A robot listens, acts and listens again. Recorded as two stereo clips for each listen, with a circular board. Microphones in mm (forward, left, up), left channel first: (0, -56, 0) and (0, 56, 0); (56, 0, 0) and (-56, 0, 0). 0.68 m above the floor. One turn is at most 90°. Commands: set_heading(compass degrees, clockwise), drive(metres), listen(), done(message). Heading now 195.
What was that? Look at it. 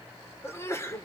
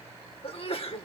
set_heading(220)
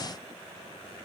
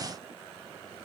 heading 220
done("Facing where the sneeze came from. I can't hear it now.")